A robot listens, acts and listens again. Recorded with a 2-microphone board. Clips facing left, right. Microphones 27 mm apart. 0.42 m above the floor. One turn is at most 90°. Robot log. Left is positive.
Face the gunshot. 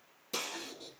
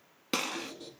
note: The gunshot: about 60° right or 120° right.
cmd yaw -60
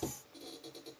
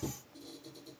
cmd idle
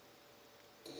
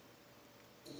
end: I heard a gunshot, but can't make it out now. It was about straight ahead or 60° right.